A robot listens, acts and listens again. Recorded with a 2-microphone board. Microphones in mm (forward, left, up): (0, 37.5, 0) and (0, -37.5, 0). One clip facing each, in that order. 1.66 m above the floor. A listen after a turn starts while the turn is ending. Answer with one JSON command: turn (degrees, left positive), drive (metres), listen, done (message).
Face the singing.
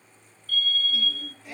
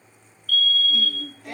{"turn": -75}
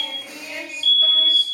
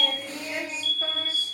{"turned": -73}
{"turn": -25}
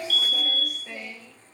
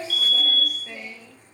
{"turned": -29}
{"done": "Facing the singing."}